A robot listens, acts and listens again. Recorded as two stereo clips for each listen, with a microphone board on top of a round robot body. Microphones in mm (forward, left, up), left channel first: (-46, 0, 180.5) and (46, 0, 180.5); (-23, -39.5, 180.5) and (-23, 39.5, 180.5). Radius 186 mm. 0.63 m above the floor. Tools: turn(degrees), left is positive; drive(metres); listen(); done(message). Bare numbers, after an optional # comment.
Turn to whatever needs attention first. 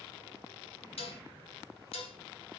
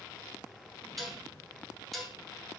listen()
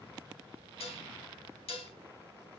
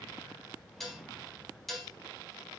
listen()
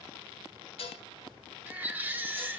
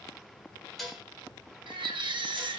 # The baby crying: 75° left.
turn(75)
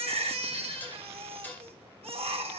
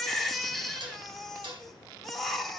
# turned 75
done("Found it: a baby crying, straight ahead, 1 to 2 m away.")